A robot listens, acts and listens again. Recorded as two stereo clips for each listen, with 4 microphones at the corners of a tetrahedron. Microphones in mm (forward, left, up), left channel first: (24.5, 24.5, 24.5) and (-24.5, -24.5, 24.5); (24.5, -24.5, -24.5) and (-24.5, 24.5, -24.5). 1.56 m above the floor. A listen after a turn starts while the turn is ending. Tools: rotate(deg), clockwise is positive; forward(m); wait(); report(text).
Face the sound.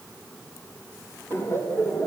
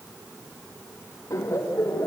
report("Found it: laughter, straight ahead, 2 to 4 m away.")